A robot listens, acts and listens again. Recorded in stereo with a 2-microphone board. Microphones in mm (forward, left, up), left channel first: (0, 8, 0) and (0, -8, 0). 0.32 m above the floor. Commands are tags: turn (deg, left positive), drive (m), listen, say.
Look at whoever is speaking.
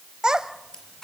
<turn deg="-45"/>
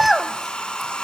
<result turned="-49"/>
<turn deg="-10"/>
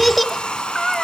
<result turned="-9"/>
<say>Facing the child speaking, under 1 m away.</say>